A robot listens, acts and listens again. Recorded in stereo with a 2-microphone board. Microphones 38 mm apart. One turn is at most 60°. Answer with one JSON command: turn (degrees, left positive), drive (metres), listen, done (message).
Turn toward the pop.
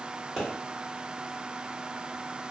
{"turn": -30}
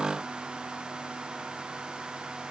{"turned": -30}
{"listen": true}
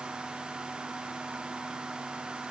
{"done": "I heard a pop, but can't make it out now. It was about 25° left or 145° right."}